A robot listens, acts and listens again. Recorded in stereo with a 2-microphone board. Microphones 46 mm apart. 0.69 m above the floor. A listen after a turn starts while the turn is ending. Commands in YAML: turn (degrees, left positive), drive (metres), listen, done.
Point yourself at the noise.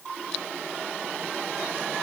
listen: true
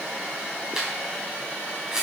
turn: -30
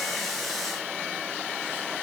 listen: true
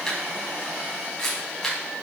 turn: 15
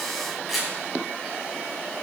done: "Facing the camera shutter, over 4 m away."